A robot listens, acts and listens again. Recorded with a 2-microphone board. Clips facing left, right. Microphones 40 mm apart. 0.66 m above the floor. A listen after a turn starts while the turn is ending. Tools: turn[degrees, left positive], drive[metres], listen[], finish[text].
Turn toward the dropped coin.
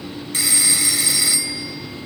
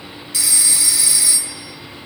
Action: listen[]
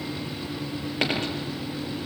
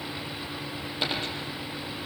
Thought: The dropped coin: about 65° left or 115° left.
Action: turn[65]
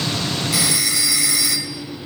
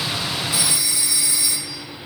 Action: listen[]
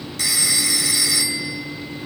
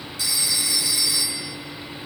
Action: finish[I heard a dropped coin, but can't make it out now. It was about straight ahead or 50° left.]